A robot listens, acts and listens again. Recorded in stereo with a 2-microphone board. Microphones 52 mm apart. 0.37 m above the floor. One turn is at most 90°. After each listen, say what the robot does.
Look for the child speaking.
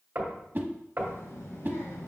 Turn 60° left.
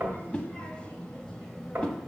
Found it: a child speaking, straight ahead, 1 to 2 m away.